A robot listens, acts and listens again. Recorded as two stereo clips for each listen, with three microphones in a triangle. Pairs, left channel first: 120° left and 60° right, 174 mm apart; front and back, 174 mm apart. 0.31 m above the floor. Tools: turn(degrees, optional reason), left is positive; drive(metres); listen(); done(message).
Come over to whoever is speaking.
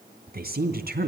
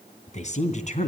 turn(degrees=-45, reason="The woman speaking: 45° right.")
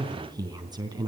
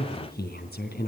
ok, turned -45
drive(metres=1.0)
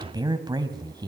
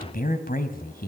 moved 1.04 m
drive(metres=1.0)
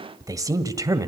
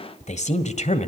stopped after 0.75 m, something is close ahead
done("Arrived at the woman speaking, straight ahead.")